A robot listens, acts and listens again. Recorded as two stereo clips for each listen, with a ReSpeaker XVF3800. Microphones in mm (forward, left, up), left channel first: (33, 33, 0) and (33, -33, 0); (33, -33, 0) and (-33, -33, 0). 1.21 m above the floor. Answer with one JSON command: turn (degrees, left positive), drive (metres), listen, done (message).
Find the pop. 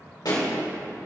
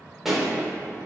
{"turn": 95}
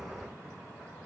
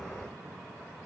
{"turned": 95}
{"done": "Facing where the pop came from. I can't hear it now."}